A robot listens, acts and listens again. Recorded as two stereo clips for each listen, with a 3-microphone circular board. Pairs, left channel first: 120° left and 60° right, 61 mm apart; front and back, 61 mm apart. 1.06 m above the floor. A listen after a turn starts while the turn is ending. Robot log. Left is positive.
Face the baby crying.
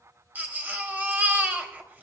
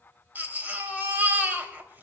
note: The baby crying: 120° right.
cmd yaw -120
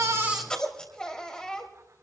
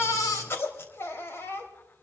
note: The baby crying is now 45° left.
cmd yaw +45
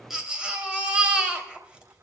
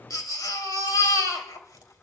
note: The baby crying is now 15° left.
cmd yaw +15
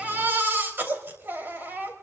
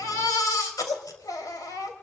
end: Found it: a baby crying, straight ahead.